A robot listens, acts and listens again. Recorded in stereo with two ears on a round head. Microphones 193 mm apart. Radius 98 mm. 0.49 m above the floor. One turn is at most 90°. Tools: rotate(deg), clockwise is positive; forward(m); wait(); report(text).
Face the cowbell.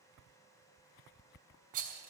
wait()
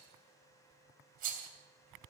wait()
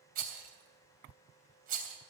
report("I can't make out a cowbell to turn to.")